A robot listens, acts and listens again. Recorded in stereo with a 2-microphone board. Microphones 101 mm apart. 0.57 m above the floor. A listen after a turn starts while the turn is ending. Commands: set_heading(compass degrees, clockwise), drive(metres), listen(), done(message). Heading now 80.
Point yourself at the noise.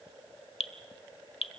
set_heading(5)
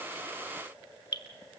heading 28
set_heading(343)
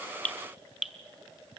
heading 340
done("Found it: dripping, straight ahead, 1 to 2 m away.")